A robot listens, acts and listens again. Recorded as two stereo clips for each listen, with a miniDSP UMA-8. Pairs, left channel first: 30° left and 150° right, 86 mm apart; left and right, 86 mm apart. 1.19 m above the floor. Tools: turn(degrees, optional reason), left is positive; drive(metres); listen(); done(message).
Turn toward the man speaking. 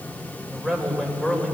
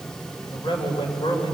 turn(degrees=110, reason="The man speaking: 110° left.")
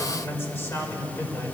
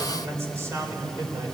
turn(degrees=-35, reason="The man speaking is now 35° right.")
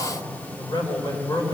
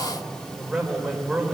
done("Found it: a man speaking, straight ahead, over 4 m away.")